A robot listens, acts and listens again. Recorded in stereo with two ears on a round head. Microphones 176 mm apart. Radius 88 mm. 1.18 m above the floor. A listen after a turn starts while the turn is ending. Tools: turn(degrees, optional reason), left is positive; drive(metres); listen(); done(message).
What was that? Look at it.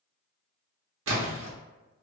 turn(degrees=-70, reason="The splash: about 70° right or 110° right.")
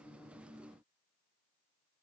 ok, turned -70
listen()
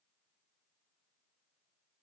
done("I heard a splash, but can't make it out now. It was about straight ahead or 40° right.")